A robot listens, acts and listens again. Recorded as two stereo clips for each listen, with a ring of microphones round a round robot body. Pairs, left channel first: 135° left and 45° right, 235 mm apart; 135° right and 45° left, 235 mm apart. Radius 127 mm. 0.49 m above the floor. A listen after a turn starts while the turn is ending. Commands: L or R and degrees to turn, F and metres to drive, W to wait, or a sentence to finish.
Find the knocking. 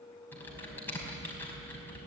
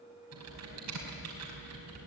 W
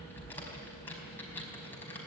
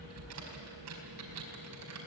W
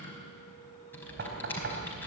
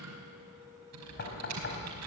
R90
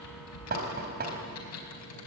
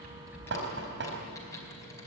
Found it: knocking, straight ahead, 2 to 4 m away.